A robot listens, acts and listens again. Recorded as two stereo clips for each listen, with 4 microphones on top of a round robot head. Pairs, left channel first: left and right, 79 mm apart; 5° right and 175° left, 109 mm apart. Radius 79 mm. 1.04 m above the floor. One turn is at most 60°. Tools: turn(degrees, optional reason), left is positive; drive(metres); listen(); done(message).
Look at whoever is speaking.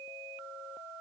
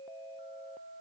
listen()
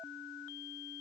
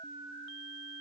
listen()
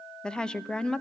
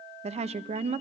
turn(degrees=60, reason="The woman speaking: 170° left.")
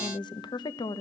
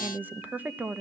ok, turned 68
turn(degrees=60, reason="The woman speaking is now 105° left.")
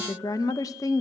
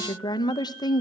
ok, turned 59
turn(degrees=45, reason="The woman speaking is now 45° left.")
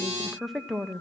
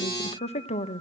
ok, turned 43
done("Found it: a woman speaking, straight ahead, under 1 m away.")